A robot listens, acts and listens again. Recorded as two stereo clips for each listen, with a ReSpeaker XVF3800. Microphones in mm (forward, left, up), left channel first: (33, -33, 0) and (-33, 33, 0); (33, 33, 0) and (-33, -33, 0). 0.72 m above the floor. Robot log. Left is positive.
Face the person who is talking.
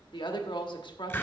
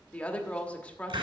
note: The woman speaking: 30° right.
cmd yaw -30
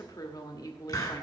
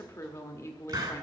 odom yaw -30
note: The woman speaking is now 10° right.
cmd yaw -10
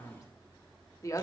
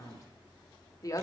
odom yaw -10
end: Facing the woman speaking, 1 to 2 m away.